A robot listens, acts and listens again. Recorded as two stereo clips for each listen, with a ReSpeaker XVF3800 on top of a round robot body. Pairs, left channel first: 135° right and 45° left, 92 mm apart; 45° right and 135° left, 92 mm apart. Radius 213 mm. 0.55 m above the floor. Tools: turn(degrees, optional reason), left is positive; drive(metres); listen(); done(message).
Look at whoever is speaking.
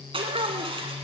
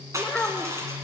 turn(degrees=35, reason="The child speaking: 35° left.")
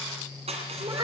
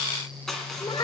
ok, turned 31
done("Found it: a child speaking, straight ahead, 2 to 4 m away.")